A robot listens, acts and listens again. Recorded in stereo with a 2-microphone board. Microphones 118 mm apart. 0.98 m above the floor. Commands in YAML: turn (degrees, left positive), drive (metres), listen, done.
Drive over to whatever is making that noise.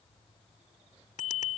turn: 90
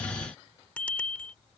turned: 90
turn: 10
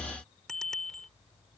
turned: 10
drive: 1.0
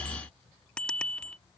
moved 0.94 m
turn: 10
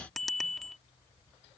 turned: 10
drive: 1.0
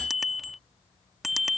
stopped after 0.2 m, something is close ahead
done: "Arrived at the bicycle bell, straight ahead."